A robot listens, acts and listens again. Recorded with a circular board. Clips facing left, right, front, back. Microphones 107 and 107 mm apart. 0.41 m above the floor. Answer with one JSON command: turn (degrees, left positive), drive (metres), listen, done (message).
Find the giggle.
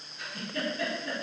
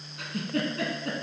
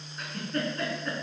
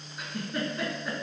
{"turn": -95}
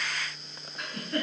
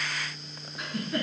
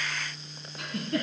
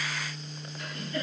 {"done": "Found it: a giggle, straight ahead."}